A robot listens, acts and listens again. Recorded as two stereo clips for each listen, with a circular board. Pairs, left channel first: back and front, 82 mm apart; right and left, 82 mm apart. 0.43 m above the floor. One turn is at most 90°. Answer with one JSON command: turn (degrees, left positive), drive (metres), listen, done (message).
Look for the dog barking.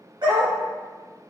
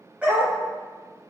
{"turn": 15}
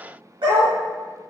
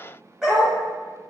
{"done": "Facing the dog barking, under 1 m away."}